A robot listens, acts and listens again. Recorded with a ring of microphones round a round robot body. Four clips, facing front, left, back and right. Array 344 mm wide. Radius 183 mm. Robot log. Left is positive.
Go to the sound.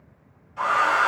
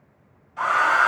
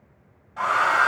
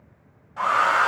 note: The hair dryer: 135° right.
cmd yaw -135
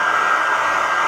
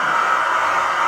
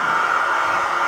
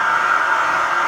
note: The hair dryer is now 35° left.
cmd yaw +35
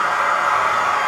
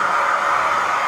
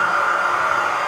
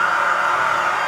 note: The hair dryer is now 15° left.
cmd yaw +15
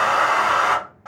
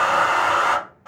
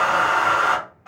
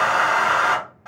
cmd fwd 1.0
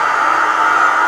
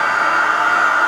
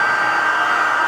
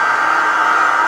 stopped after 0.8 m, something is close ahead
note: The hair dryer is now 10° right.
cmd yaw -10
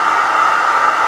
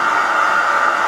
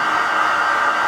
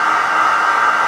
end: Arrived at the hair dryer, straight ahead.